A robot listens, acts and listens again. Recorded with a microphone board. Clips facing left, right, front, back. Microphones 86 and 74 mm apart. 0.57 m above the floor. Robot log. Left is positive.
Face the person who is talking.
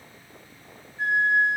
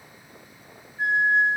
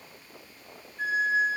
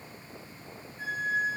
cmd idle
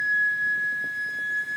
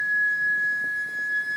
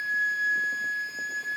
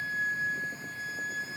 cmd idle
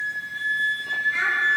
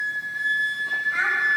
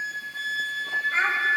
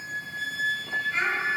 note: The child speaking: 50° right.
cmd yaw -50
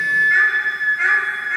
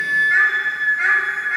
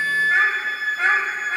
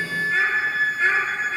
cmd idle
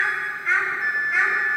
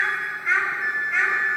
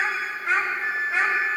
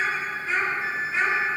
end: Found it: a child speaking, straight ahead.